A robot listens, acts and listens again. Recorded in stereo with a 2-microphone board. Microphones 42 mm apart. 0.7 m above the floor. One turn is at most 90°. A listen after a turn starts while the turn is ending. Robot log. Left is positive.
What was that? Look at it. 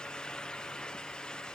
cmd idle
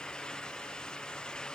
cmd idle
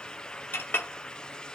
note: The clink: about 60° left or 120° left.
cmd yaw +60
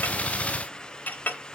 note: So it is at 45° left.
cmd yaw +45
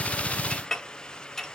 note: The clink is now 10° left.
cmd yaw +10
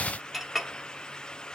end: Found it: a clink, straight ahead.